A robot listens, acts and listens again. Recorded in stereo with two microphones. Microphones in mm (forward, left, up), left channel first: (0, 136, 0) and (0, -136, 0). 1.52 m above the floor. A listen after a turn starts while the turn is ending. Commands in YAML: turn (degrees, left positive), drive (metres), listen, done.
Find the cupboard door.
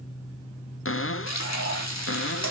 turn: 50
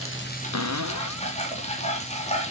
turn: 80
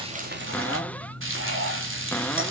done: "Found it: a cupboard door, straight ahead, under 1 m away."